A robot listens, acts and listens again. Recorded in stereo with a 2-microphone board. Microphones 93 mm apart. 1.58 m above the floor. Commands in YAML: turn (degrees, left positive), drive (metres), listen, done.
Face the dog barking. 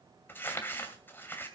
listen: true
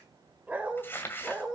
turn: -30
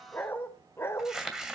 turn: 30
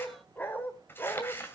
turn: 25
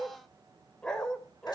turn: 10
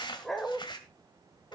done: "Facing the dog barking."